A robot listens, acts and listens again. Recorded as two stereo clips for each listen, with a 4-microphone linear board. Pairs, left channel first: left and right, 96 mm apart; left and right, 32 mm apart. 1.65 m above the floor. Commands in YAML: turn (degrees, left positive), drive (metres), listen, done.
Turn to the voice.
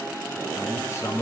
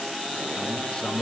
turn: 30
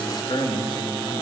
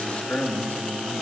turn: 120
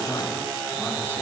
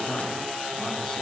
listen: true
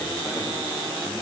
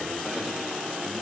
listen: true
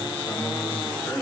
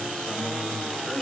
turn: 15
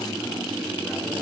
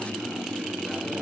listen: true
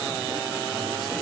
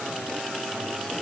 listen: true
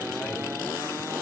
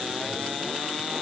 done: "Facing where the man speaking came from. I can't hear it now."